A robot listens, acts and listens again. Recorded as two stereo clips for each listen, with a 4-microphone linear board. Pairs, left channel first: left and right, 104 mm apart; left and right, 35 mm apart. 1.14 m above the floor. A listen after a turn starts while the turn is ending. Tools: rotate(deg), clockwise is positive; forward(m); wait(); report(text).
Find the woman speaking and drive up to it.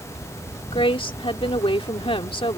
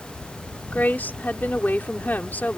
rotate(-55)
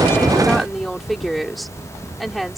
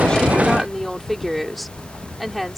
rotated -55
forward(1.0)
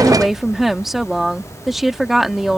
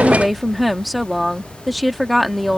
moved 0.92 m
forward(1.0)
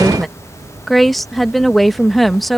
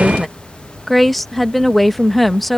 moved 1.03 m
forward(1.0)
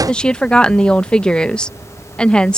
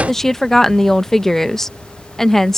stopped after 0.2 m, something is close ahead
rotate(-10)
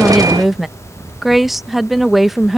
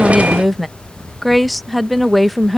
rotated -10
report("Arrived at the woman speaking, straight ahead.")